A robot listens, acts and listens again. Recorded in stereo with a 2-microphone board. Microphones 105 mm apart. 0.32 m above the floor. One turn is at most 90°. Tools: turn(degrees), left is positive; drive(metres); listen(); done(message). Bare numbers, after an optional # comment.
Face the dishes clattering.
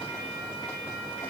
listen()
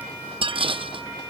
# The dishes clattering: about 60° right or 120° right.
turn(-60)
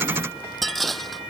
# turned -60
done("Found it: dishes clattering, straight ahead.")